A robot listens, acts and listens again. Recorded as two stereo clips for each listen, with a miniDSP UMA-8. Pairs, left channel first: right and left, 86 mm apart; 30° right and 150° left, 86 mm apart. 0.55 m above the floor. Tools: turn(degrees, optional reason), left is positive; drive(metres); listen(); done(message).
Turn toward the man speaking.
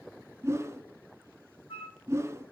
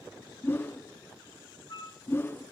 listen()
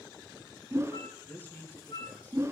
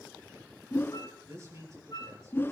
turn(degrees=-155, reason="The man speaking: 155° right.")
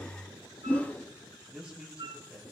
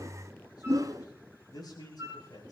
turn(degrees=10, reason="The man speaking is now 10° left.")
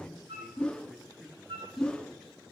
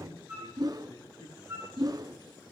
done("Facing the man speaking.")